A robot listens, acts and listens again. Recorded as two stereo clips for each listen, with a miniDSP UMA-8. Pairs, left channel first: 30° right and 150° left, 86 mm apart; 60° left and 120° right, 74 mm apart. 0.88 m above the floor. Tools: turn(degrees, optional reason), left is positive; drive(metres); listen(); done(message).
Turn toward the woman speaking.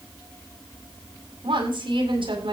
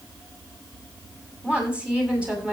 turn(degrees=165, reason="The woman speaking: 165° left.")
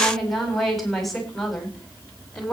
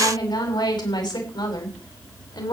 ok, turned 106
turn(degrees=55, reason="The woman speaking is now 55° left.")
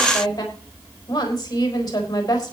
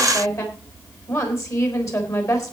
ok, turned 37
turn(degrees=15, reason="The woman speaking is now 15° left.")
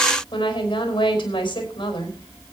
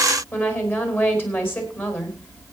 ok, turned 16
done("Facing the woman speaking.")